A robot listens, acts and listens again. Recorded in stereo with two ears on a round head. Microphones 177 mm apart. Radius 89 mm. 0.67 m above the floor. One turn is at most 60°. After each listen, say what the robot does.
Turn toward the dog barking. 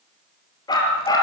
Turn 20° left.
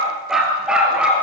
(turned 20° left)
Facing the dog barking.